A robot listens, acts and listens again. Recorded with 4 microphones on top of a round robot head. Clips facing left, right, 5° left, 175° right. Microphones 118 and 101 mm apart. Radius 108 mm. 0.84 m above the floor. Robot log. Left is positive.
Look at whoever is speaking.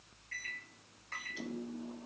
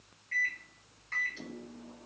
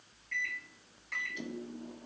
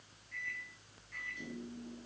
cmd idle
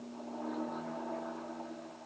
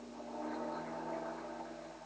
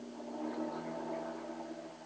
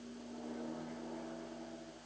cmd idle
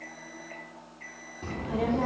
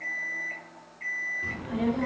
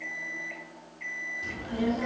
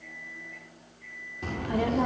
note: The child speaking: 150° left.
cmd yaw +150
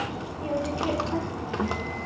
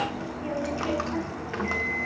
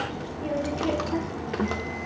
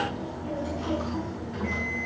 note: The child speaking is now 20° left.
cmd yaw +20
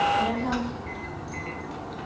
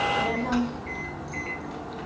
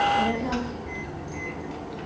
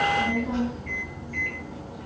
end: Found it: a child speaking, straight ahead, 1 to 2 m away.